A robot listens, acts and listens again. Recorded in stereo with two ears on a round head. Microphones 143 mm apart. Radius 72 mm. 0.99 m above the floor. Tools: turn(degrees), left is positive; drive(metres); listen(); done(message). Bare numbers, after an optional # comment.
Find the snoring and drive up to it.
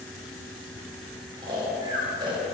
# The snoring: about 30° right or 150° right.
turn(-30)
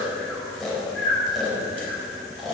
drive(1.0)
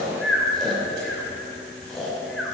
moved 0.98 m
drive(1.0)
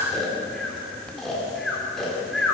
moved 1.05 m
drive(1.0)
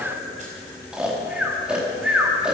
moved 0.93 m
drive(1.0)
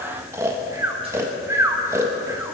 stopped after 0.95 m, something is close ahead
# The snoring is now 20° right.
turn(-20)
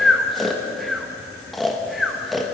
done("Arrived at the snoring, straight ahead.")